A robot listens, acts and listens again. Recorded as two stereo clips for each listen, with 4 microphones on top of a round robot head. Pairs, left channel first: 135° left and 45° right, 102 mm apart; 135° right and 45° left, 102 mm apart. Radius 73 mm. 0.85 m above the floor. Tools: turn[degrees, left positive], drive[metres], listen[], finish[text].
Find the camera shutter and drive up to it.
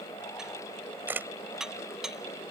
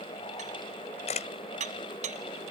Thought: The camera shutter: 115° right.
Action: turn[-115]
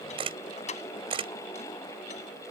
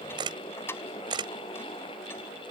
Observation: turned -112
Action: drive[1.0]
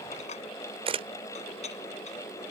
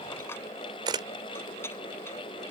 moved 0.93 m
Action: drive[1.0]
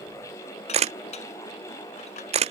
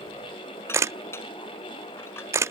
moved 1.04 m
Thought: The camera shutter is now 20° right.
Action: turn[-20]
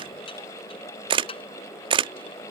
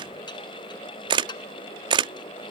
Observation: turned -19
Action: drive[1.0]
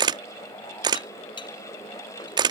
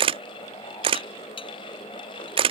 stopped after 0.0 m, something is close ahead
Action: finish[Arrived at the camera shutter, straight ahead.]